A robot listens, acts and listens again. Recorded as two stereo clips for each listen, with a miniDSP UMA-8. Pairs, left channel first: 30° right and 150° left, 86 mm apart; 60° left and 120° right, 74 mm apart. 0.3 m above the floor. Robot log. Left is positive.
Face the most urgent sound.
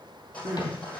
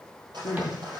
note: The crying: 100° left.
cmd yaw +100
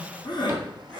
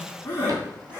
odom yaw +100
end: Found it: crying, straight ahead.